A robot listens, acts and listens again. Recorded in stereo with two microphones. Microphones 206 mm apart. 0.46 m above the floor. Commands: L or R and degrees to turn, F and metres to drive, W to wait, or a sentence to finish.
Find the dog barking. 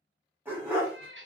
R30
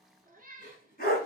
L45
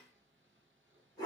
L20
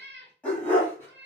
L10
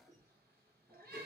W
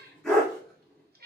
Found it: a dog barking, straight ahead, 2 to 4 m away.